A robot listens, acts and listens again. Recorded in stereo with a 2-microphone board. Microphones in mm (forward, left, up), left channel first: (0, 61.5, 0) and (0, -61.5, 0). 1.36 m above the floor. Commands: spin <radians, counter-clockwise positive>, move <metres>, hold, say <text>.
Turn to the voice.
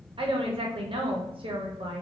spin -0.87
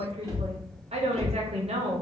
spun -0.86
spin -1.31
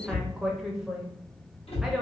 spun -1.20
say Facing the woman speaking.